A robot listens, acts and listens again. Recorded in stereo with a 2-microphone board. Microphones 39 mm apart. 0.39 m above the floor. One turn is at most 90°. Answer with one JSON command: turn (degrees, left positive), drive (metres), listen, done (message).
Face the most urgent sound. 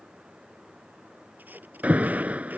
{"turn": -35}
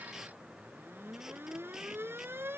{"turn": -90}
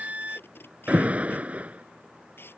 {"turn": -35}
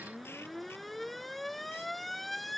{"done": "Found it: an alarm, straight ahead."}